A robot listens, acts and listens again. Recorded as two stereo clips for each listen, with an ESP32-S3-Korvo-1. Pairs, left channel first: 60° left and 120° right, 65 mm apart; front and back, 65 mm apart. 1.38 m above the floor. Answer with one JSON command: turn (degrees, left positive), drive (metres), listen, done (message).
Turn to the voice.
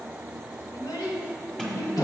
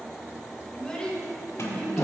{"turn": 75}
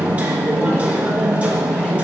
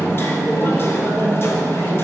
{"listen": true}
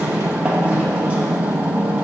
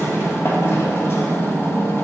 {"listen": true}
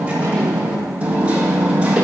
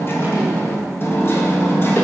{"done": "Facing where the child speaking came from. I can't hear it now."}